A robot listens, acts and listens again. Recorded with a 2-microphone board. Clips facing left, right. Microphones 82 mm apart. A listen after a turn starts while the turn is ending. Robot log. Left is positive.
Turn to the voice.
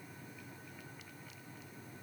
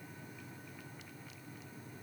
cmd idle
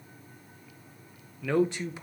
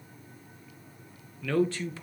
note: The man speaking: about 20° left or 160° left.
cmd yaw +20
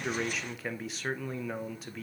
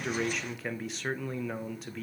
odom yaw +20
end: Found it: a man speaking, straight ahead, under 1 m away.